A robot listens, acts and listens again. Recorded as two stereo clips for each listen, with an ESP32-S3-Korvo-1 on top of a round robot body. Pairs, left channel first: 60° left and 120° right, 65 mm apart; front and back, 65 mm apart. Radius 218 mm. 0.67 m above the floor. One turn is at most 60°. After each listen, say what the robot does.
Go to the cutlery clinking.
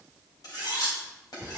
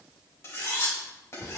Turn 50° left.
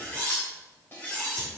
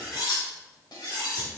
Drive 1.0 m forward.
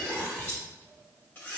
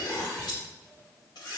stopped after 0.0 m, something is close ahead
Blocked. The cutlery clinking is further on, straight ahead.